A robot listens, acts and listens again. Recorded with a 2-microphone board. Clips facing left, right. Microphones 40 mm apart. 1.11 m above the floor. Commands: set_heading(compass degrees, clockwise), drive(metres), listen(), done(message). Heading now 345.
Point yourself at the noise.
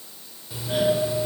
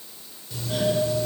set_heading(330)
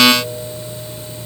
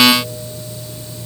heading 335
set_heading(180)
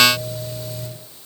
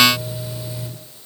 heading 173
set_heading(183)
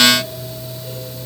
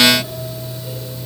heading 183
done("Facing the doorbell, over 4 m away.")